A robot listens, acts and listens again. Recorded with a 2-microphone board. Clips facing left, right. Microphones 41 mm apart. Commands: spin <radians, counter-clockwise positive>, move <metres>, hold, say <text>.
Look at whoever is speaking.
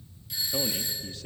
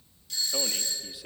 spin -0.52
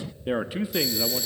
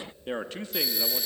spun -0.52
spin 0.26
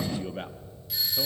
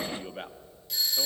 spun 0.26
say Facing the man speaking.